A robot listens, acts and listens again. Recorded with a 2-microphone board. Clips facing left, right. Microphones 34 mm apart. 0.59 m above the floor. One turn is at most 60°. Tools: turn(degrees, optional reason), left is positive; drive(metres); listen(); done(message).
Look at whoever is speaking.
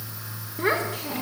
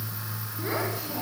turn(degrees=50, reason="The child speaking: about 50° left or 130° left.")
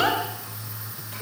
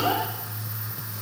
listen()
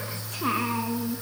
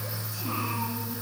turn(degrees=60, reason="So it is at 80° left.")
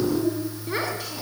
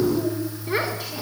done("Found it: a child speaking, straight ahead, over 4 m away.")